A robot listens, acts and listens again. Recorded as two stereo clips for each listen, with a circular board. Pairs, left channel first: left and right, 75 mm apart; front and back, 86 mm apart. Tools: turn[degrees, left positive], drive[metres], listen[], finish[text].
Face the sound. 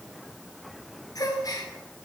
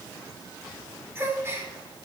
Thought: The gasp: 125° left.
Action: turn[125]
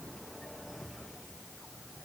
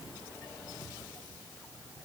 Action: finish[Facing where the gasp came from. I can't hear it now.]